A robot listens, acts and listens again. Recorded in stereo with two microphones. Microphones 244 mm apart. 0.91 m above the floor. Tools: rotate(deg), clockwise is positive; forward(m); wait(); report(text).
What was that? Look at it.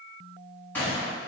rotate(-30)
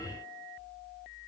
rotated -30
wait()
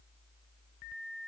report("I heard a gunshot, but can't make it out now. It was about 25° right or 145° left.")